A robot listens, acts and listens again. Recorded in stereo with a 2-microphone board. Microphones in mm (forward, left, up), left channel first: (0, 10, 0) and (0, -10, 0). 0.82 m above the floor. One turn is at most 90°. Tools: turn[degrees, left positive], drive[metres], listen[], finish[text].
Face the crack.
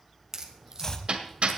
Thought: The crack: about 35° right or 145° right.
Action: turn[-35]
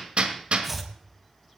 Action: listen[]
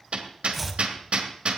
Action: finish[I heard a crack, but can't make it out now. It was about straight ahead or 110° right.]